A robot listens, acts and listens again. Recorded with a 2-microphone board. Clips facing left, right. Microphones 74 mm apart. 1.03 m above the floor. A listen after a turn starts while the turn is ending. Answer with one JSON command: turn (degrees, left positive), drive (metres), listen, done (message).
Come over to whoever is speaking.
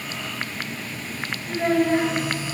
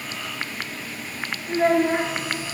{"turn": -30}
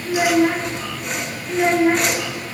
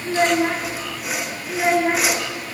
{"drive": 1.0}
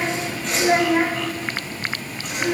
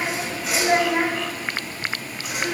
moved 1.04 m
{"drive": 1.0}
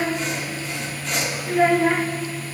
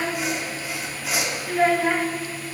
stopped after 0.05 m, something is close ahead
{"done": "I am next to the child speaking."}